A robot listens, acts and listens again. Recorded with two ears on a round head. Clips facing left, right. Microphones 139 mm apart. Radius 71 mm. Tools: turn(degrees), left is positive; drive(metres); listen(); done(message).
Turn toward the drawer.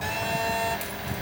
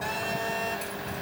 listen()
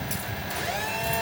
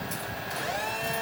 listen()
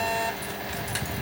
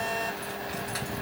done("I can't make out a drawer, only a phone buzzing.")